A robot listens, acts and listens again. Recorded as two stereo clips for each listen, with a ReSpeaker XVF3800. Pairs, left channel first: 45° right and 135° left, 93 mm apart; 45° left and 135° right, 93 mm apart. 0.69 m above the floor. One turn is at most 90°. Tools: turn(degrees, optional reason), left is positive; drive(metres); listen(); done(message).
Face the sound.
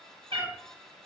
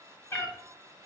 turn(degrees=90, reason="The cat meowing: 110° left.")
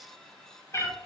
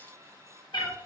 turn(degrees=15, reason="The cat meowing is now 15° left.")
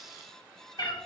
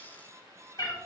done("Found it: a cat meowing, straight ahead.")